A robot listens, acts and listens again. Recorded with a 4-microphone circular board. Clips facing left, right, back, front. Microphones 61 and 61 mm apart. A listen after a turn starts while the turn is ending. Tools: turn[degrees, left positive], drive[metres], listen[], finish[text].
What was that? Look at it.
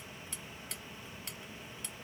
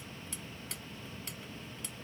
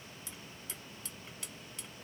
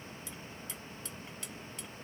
Action: listen[]
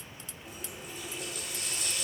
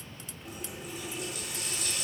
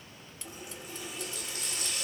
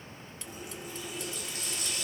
Thought: The running tap: straight behind.
Action: turn[180]
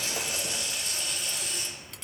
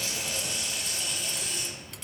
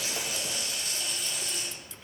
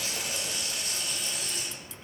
Action: finish[Found it: a running tap, straight ahead, 1 to 2 m away.]